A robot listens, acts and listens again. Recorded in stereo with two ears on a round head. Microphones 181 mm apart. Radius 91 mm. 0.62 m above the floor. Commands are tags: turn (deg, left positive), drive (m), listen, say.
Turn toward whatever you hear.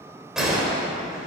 <turn deg="-30"/>
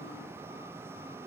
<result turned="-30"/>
<listen/>
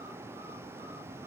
<say>I heard a gunshot, but can't make it out now. It was about 25° left or 145° right.</say>